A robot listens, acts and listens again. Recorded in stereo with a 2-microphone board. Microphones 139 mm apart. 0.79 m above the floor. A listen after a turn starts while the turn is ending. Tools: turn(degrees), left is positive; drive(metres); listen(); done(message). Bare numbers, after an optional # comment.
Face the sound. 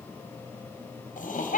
# The laughter: about 70° left or 110° left.
turn(70)
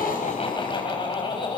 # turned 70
# So it is at 40° left.
turn(40)
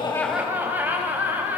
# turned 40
# The laughter is now 10° right.
turn(-10)
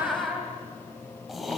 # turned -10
done("Facing the laughter.")